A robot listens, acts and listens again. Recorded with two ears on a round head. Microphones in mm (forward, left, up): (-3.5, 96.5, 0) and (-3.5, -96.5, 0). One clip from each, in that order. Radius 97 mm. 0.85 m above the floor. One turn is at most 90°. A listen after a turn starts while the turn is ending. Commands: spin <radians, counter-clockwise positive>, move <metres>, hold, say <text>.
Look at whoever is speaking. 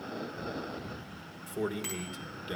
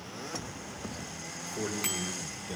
spin 0.44
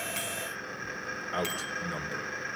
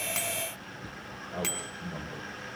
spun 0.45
spin 1.57
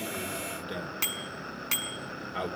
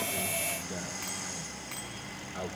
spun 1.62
spin 0.61
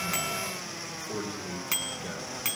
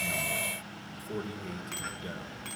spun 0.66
say Found it: a man speaking, straight ahead.